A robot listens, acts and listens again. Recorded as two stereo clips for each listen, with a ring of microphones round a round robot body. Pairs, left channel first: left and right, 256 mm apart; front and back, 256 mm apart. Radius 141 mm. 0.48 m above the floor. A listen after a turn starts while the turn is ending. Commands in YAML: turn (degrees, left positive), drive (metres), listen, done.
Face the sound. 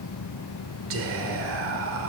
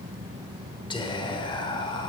turn: -70
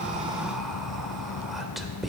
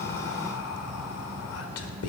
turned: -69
done: "Found it: whispering, straight ahead."